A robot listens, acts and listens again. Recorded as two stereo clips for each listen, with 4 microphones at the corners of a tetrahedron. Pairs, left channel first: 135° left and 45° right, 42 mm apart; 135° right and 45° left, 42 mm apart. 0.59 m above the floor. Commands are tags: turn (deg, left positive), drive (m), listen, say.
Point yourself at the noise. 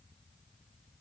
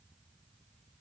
<listen/>
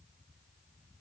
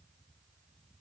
<listen/>
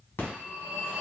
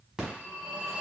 <turn deg="125"/>
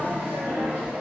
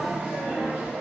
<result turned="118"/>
<turn deg="10"/>
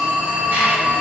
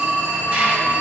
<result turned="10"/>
<say>Facing the phone ringing, 1 to 2 m away.</say>